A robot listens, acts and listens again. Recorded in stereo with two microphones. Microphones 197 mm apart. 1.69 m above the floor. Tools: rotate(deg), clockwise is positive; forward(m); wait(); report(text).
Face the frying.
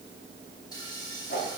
rotate(-20)
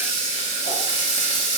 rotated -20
rotate(-140)
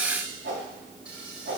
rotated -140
wait()
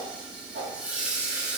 report("Facing the frying, 2 to 4 m away.")